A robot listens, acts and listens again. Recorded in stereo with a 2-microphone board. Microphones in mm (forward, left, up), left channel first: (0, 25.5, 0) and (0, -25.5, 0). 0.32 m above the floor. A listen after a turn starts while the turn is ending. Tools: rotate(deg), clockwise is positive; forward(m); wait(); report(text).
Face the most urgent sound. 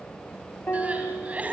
rotate(30)
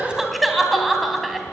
report("Found it: crying, straight ahead, 2 to 4 m away.")